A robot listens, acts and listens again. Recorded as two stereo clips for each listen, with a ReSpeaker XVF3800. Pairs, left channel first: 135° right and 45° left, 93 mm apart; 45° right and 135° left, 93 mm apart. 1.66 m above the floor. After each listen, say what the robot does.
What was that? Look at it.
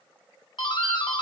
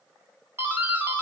Turn 160° right.
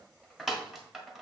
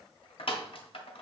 Turn 45° right.
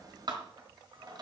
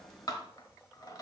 Facing the doorbell, 1 to 2 m away.